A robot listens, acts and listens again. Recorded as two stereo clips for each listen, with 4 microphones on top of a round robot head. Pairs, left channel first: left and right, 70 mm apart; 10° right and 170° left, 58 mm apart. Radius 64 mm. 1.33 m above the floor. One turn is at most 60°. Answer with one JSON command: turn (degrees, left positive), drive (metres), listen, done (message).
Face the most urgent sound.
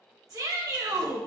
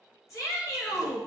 {"turn": -45}
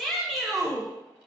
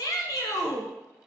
{"done": "Facing the shout."}